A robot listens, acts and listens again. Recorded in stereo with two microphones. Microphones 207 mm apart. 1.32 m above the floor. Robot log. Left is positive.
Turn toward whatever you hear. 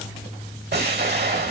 note: The explosion: about 55° right or 125° right.
cmd yaw -55
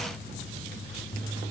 cmd idle
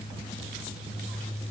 end: I heard an explosion, but can't make it out now. It was about straight ahead or 70° right.